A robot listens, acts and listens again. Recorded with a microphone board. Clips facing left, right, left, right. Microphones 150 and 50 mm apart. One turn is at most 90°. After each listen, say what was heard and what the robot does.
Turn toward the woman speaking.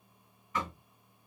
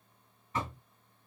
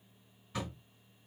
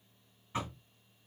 Keep listening.
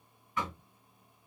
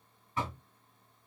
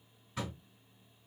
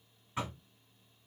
Keep listening.
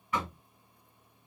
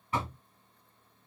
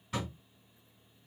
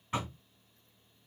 I can't make out a woman speaking, only knocking.